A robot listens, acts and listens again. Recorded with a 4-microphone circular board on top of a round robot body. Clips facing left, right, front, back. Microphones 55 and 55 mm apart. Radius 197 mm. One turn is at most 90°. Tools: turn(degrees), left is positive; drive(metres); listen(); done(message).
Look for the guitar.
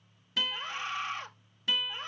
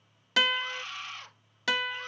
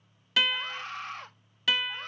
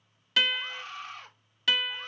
turn(degrees=-90)
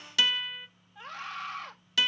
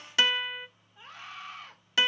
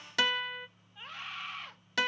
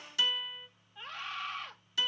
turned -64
turn(degrees=-25)
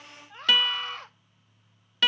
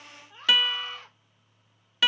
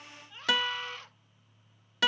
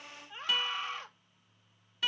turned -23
done("Facing the guitar, under 1 m away.")